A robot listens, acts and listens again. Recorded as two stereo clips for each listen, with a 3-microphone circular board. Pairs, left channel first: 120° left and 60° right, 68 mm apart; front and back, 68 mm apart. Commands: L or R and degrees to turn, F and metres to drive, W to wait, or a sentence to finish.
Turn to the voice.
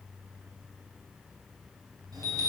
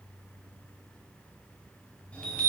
W
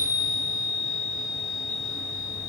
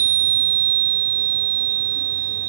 W
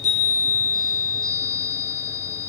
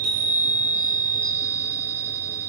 I can't make out anyone speaking, only a chime.